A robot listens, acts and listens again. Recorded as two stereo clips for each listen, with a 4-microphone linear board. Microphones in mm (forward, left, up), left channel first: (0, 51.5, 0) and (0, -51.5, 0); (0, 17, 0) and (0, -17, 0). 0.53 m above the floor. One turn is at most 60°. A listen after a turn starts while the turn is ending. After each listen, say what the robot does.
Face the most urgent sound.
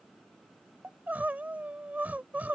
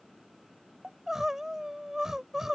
Turn 15° right.
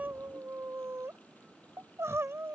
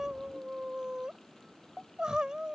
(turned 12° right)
Turn 60° right.
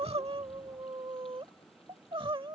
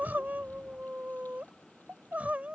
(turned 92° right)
Turn 60° right.
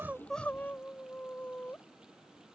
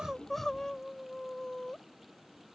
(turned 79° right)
Turn 20° left.
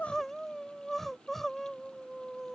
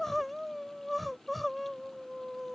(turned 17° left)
Found it: crying, straight ahead.